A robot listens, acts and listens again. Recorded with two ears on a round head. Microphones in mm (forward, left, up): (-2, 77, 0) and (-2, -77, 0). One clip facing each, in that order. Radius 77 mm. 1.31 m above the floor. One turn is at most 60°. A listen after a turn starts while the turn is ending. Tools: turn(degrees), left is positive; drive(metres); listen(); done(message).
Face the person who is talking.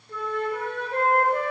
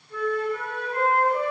listen()
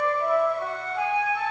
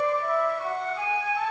listen()
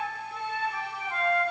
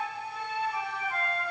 done("I can't make out anyone speaking to turn to.")